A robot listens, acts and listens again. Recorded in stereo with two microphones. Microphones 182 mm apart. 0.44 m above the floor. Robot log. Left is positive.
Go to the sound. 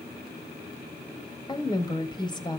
note: The woman speaking: about 25° left or 155° left.
cmd yaw +25
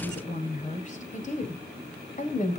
note: So it is at 130° left.
cmd yaw +130
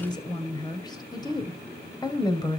note: The woman speaking is now 25° left.
cmd yaw +25
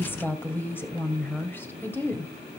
note: The woman speaking is now 15° left.
cmd yaw +15
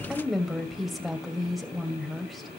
cmd fwd 1.0
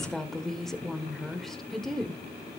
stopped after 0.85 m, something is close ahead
end: I am next to the woman speaking.